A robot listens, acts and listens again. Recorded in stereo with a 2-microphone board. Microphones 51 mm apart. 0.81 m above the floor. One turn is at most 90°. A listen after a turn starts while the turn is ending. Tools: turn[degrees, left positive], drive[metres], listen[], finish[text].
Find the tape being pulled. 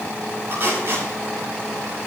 Thought: The tape being pulled: about 40° right or 140° right.
Action: turn[-40]
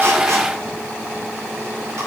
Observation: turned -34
Action: listen[]
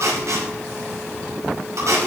Thought: So it is at 105° right.
Action: turn[-90]
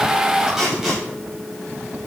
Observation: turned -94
Thought: The tape being pulled is now 10° right.
Action: turn[-10]
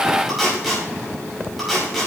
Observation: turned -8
Action: finish[Facing the tape being pulled, over 4 m away.]